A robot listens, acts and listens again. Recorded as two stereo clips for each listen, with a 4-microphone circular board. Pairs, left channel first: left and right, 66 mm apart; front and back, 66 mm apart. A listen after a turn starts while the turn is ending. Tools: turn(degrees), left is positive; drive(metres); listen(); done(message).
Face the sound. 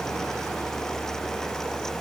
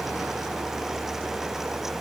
listen()
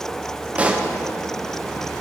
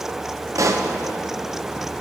turn(degrees=-155)
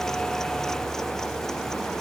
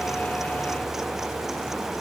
done("Facing where the pop came from. I can't hear it now.")